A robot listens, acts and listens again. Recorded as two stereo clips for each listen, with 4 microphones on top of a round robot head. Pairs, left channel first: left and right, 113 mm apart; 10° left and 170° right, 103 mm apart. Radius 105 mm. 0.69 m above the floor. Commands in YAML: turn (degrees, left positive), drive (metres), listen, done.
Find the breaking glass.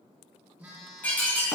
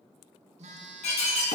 turn: 15
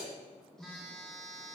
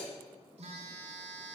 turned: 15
done: "I heard breaking glass from this way, but can't make it out now."